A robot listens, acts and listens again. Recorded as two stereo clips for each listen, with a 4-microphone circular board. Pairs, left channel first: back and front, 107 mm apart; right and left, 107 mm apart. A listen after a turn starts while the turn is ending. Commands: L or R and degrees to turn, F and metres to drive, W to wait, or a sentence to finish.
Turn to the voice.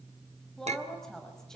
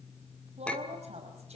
L95
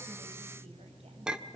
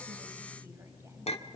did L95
W
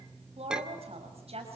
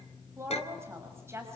L25
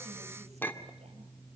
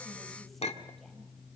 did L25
W
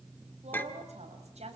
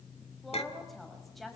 Found it: a woman speaking, straight ahead.